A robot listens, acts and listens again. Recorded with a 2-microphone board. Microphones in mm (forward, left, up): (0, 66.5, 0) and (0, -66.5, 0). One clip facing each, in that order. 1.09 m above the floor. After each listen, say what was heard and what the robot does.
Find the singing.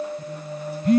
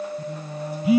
The singing: about 30° right or 150° right. Turn 30° right.
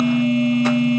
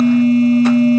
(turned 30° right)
Keep listening.
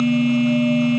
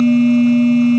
Keep listening.
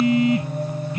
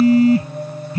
So it is at 10° left. Turn 10° left.
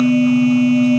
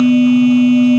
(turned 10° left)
Keep listening.
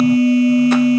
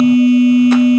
Keep listening.
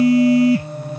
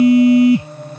The singing is now 10° left. Turn 10° left.
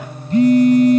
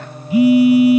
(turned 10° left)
Found it: singing, straight ahead.